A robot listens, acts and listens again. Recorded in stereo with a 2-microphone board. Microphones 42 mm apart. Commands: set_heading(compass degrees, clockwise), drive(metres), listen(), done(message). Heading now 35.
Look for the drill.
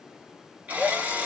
set_heading(75)
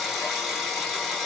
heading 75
done("Facing the drill.")